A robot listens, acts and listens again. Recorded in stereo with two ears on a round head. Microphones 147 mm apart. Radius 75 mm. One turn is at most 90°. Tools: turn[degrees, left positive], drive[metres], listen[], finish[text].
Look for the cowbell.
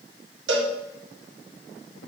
Thought: The cowbell: about 70° right or 110° right.
Action: turn[-70]
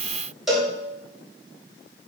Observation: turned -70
Action: finish[Found it: a cowbell, straight ahead, 2 to 4 m away.]